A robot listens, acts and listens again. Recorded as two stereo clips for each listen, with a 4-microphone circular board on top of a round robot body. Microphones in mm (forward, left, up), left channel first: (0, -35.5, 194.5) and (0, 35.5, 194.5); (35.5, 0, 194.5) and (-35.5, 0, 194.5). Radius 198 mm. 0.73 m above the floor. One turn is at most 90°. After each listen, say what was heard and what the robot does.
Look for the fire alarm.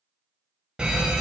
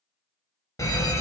The fire alarm: 15° left. Turn 15° left.
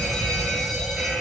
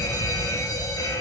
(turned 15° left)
Facing the fire alarm, 2 to 4 m away.